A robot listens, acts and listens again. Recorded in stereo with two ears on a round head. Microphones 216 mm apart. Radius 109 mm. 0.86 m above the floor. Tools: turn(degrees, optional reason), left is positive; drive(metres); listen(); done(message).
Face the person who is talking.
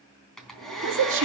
turn(degrees=-55, reason="The woman speaking: about 55° right or 125° right.")
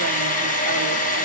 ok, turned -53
listen()
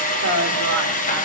turn(degrees=-70, reason="So it is at 70° right.")
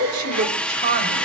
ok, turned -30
turn(degrees=-50, reason="The woman speaking is now 50° right.")
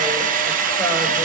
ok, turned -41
listen()
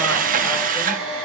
listen()
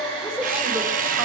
turn(degrees=-10, reason="The woman speaking is now 10° right.")
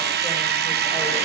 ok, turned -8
listen()
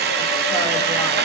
listen()
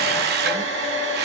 done("I heard a woman speaking from this way, but can't make it out now.")